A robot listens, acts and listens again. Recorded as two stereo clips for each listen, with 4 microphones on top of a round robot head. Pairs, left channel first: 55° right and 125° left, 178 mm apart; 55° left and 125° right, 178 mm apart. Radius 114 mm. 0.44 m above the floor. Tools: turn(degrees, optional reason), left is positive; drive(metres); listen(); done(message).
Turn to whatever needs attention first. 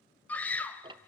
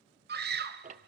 turn(degrees=-135, reason="The scream: 135° right.")
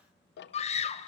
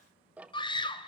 done("Facing the scream.")